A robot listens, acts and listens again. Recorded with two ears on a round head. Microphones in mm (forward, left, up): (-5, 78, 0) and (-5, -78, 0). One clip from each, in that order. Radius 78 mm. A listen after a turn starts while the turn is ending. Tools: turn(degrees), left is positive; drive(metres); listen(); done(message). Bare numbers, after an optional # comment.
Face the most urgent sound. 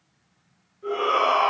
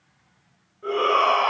turn(-30)
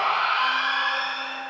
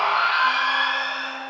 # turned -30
# So it is at 140° right.
turn(-140)
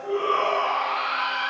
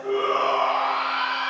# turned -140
# The shout is now 50° right.
turn(-50)
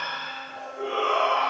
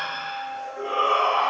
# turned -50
# The shout is now 30° right.
turn(-30)
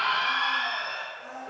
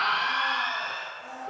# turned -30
done("Facing the shout.")